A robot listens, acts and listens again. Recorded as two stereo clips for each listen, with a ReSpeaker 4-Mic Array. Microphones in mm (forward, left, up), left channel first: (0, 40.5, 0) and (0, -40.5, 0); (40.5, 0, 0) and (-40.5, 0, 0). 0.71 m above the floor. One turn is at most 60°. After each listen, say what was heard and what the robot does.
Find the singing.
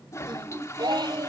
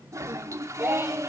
The singing: 125° right. Turn 60° right.
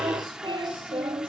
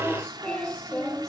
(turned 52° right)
The singing is now 80° right. Turn 60° right.
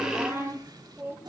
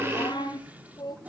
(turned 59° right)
The singing is now 30° right. Turn 30° right.
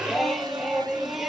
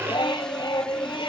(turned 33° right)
Found it: singing, straight ahead, over 4 m away.